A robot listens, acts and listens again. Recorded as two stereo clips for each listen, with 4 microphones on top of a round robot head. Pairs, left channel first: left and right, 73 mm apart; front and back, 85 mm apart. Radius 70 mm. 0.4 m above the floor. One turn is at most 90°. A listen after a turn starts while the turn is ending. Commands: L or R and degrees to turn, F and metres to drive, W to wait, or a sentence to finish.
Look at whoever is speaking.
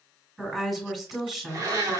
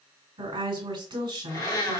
R90
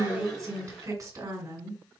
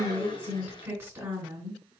R90
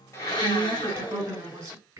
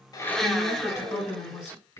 R45
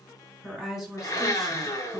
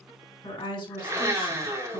Facing the woman speaking.